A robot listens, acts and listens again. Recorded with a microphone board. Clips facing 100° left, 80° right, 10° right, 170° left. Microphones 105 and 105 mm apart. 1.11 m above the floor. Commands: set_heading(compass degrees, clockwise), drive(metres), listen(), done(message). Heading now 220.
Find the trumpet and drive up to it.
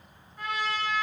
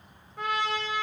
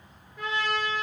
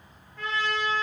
set_heading(305)
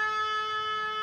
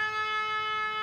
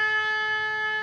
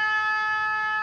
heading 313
drive(1.0)
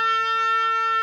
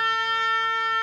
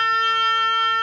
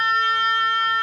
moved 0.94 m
set_heading(303)
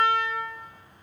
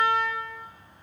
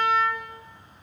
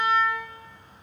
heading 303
drive(1.0)
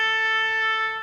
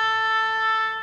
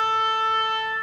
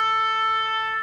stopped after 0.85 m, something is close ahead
done("I am next to the trumpet.")